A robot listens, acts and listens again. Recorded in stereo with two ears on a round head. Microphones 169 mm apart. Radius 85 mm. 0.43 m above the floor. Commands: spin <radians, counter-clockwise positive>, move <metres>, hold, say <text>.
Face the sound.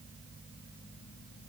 hold
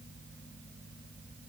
hold
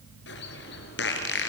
spin 1.05
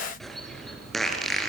say Facing the bird, 2 to 4 m away.